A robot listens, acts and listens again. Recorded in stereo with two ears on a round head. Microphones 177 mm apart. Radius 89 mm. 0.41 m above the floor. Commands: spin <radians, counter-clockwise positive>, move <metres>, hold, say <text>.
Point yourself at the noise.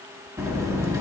spin -0.52
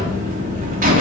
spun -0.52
spin -2.36
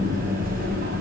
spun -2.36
spin -0.79
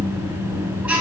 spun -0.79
spin -0.17
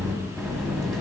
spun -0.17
say Facing the buzzer.